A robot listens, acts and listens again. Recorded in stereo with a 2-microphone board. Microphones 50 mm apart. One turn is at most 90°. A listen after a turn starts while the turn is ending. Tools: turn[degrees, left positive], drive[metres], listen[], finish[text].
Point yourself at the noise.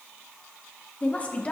Thought: The woman speaking: about 25° left or 155° left.
Action: turn[25]
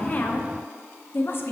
Thought: So it is at 135° left.
Action: turn[90]
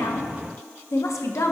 Thought: The woman speaking is now 75° left.
Action: turn[75]
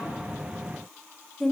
Action: finish[Facing the woman speaking.]